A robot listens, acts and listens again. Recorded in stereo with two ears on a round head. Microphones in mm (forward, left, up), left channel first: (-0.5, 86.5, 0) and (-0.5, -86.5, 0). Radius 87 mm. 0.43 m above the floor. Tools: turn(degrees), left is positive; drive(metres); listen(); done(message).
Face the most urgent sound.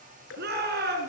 turn(degrees=-55)
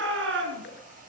turn(degrees=-70)
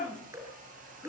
done("Found it: a shout, straight ahead.")